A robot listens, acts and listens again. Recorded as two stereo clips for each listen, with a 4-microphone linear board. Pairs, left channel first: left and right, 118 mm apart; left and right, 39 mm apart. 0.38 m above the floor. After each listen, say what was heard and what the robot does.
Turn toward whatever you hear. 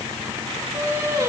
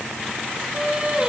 The singing: about 25° right or 155° right. Turn 25° right.
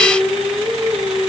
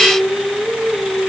Facing the singing.